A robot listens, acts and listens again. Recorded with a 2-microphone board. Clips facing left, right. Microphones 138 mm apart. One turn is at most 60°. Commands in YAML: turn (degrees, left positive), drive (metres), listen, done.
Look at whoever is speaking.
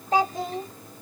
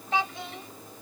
turn: 40
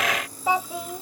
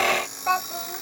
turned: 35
turn: 10
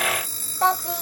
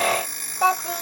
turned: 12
done: "Facing the child speaking."